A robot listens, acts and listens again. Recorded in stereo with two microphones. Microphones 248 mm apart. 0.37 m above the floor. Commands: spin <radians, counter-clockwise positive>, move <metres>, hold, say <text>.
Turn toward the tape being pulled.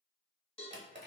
hold
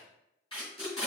spin 0.35
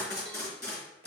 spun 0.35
spin 2.44
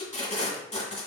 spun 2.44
spin 0.44
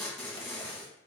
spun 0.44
say Found it: tape being pulled, straight ahead.